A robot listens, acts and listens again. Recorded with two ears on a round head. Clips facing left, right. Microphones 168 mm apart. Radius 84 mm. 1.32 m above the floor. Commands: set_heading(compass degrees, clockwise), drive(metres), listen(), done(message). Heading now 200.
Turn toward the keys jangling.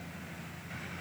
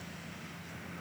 listen()
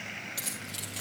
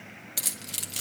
set_heading(250)
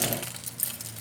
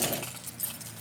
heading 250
set_heading(225)
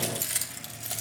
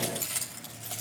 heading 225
set_heading(205)
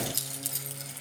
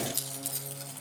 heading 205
set_heading(195)
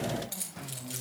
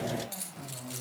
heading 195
done("Found it: keys jangling, straight ahead, 2 to 4 m away.")